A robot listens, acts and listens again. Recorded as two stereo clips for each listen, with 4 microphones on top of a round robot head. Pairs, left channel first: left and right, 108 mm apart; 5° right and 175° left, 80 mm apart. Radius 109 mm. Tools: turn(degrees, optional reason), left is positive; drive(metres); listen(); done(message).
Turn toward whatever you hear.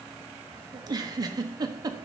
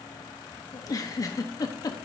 turn(degrees=-40, reason="The giggle: 40° right.")
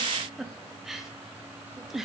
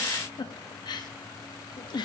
done("Facing the giggle.")